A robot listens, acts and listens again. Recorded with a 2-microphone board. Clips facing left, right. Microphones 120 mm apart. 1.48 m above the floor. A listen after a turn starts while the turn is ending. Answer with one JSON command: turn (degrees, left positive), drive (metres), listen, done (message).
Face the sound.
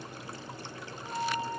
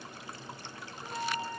{"turn": 30}
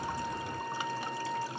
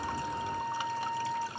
{"turn": -20}
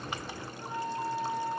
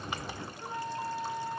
{"done": "Facing the flute, 2 to 4 m away."}